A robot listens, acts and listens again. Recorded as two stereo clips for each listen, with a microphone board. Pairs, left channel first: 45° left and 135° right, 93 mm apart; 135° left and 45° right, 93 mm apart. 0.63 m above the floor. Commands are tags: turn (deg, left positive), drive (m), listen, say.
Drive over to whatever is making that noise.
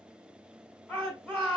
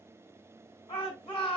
<turn deg="120"/>
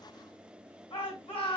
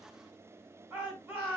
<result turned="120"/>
<turn deg="25"/>
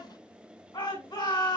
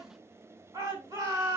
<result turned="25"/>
<drive m="1.0"/>
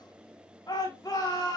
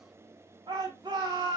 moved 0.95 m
<drive m="1.0"/>
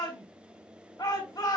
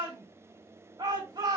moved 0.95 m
<drive m="1.0"/>
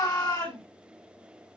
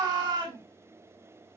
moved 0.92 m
<drive m="1.0"/>
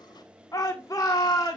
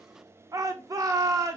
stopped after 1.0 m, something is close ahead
<say>Arrived at the shout, straight ahead.</say>